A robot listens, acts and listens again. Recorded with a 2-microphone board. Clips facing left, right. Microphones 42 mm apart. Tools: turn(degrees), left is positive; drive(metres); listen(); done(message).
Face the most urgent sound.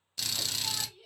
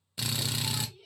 turn(degrees=30)
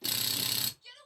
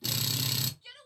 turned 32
turn(degrees=-25)
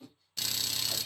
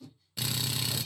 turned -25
done("Facing the shout.")